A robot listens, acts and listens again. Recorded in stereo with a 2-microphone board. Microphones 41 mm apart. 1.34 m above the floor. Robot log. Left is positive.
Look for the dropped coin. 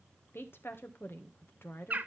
cmd idle
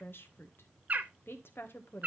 cmd idle
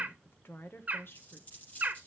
note: The dropped coin: about 30° left or 150° left.
cmd yaw +30
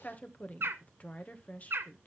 cmd idle
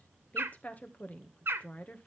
end: I heard a dropped coin, but can't make it out now. It was about straight ahead or 120° left.